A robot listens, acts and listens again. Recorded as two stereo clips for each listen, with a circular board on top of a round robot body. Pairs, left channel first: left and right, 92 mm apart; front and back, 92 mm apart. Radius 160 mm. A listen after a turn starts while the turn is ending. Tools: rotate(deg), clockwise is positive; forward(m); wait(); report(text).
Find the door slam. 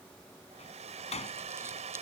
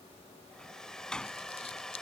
rotate(-80)
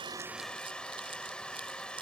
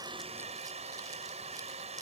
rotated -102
rotate(20)
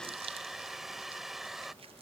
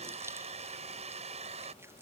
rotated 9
rotate(10)
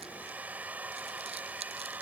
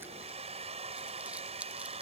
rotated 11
report("I heard a door slam from this way, but can't make it out now.")